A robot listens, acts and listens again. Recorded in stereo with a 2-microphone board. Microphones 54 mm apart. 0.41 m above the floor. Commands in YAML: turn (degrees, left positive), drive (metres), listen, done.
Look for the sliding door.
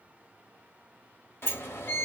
turn: 45
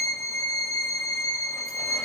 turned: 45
listen: true
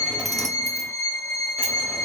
done: "Found it: a sliding door, straight ahead."